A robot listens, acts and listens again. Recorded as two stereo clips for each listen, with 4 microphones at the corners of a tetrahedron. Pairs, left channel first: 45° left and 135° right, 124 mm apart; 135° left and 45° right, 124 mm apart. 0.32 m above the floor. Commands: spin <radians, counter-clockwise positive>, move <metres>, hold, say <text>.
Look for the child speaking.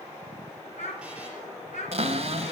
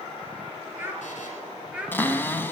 spin 0.61
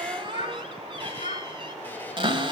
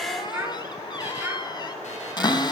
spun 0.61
spin 0.44
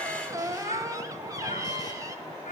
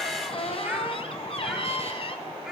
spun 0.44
hold
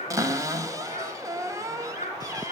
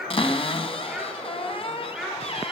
spin 0.79
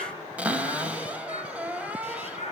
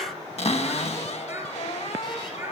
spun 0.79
spin 0.44
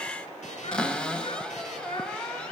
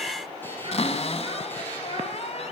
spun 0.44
hold
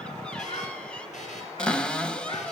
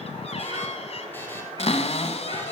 hold
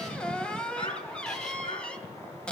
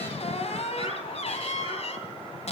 say Found it: a child speaking, straight ahead, 2 to 4 m away.